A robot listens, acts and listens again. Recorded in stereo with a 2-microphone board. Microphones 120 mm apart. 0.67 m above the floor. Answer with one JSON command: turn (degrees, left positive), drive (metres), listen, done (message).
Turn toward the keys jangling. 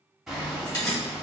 {"turn": 35}
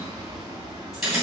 {"done": "Facing the keys jangling, 2 to 4 m away."}